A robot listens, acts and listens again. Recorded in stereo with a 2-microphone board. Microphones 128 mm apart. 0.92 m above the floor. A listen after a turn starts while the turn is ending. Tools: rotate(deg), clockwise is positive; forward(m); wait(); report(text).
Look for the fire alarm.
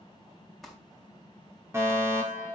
rotate(20)
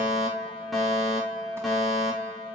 report("Found it: a fire alarm, straight ahead.")